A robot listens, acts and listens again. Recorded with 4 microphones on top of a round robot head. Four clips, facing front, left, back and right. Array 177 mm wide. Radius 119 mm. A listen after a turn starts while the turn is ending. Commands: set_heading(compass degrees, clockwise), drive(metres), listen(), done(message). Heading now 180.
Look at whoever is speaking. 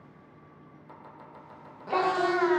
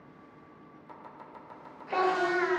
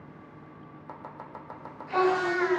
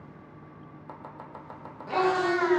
set_heading(165)
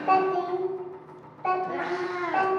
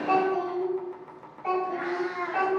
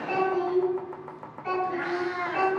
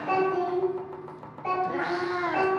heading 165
done("Facing the child speaking, 2 to 4 m away.")